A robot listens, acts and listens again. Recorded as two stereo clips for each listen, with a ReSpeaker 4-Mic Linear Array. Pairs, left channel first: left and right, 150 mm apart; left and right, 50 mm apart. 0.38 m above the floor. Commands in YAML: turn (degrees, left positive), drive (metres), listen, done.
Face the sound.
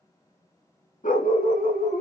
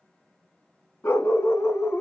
turn: 70
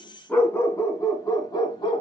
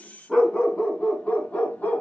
turn: 35
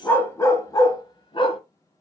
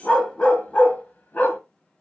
turn: 40
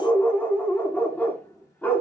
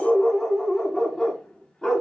turn: 15
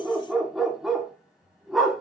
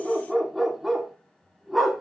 done: "Found it: a dog barking, straight ahead, 1 to 2 m away."